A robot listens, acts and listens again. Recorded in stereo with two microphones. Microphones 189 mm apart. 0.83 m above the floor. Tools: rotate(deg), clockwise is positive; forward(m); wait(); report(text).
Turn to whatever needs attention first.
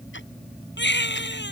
rotate(-65)
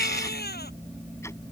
rotate(-55)
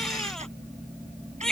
report("Facing the baby crying.")